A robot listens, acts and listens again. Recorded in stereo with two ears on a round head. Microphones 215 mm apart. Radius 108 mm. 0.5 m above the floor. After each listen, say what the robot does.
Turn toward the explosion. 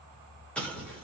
Turn 30° left.
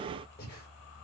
Keep listening.
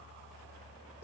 I heard an explosion, but can't make it out now. It was about 25° right or 145° left.